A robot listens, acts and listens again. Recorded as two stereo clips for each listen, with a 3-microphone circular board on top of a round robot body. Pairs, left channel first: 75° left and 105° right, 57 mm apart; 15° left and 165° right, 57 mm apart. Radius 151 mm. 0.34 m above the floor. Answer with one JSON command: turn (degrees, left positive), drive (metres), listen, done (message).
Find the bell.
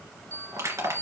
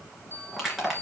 {"turn": -125}
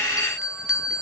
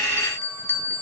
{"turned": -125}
{"turn": -20}
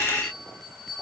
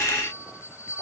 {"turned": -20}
{"done": "Found it: a bell, straight ahead."}